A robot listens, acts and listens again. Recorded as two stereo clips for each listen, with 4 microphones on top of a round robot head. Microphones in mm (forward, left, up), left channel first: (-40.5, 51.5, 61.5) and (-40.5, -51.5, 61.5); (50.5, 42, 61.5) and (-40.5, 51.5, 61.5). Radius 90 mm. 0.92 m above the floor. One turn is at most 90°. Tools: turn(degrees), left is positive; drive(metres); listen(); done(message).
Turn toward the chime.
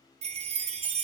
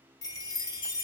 turn(degrees=-65)
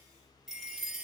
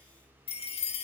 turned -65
done("Facing the chime.")